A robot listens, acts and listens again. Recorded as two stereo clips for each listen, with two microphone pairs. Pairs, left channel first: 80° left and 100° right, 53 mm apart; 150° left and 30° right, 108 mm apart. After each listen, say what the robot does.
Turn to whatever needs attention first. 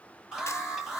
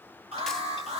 Turn 15° right.
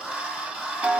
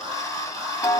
Found it: an alarm, straight ahead, over 4 m away.